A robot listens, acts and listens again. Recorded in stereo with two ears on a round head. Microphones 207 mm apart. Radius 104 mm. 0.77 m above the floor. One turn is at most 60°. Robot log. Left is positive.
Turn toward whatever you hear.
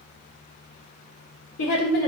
note: The woman speaking: about 70° left or 110° left.
cmd yaw +60
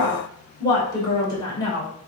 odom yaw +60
note: So it is at 20° left.
cmd yaw +20
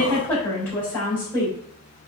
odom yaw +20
note: The woman speaking is now 10° left.
cmd yaw +10
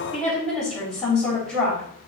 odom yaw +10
end: Found it: a woman speaking, straight ahead.